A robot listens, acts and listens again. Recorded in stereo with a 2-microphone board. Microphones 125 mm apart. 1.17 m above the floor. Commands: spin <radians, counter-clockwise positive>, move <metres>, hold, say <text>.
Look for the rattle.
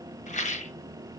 spin 1.31
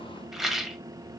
say Found it: a rattle, straight ahead, under 1 m away.